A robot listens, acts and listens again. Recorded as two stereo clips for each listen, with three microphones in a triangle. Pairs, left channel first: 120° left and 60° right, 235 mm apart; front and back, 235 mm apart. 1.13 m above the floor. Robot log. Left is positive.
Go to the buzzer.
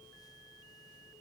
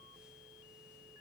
cmd idle
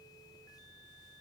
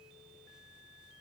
cmd idle
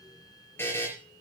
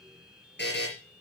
note: The buzzer: 40° left.
cmd yaw +40
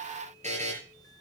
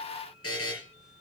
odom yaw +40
cmd fwd 1.0
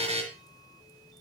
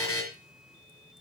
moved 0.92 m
cmd fwd 1.0
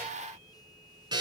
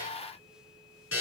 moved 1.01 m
note: The buzzer is now 10° left.
cmd yaw +10
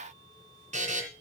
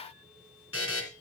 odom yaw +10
cmd fwd 1.0
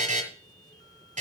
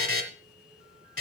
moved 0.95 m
cmd fwd 1.0
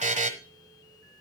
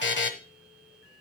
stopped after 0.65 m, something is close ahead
note: The buzzer is now 10° right.
cmd yaw -10
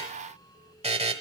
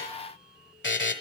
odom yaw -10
end: I am next to the buzzer.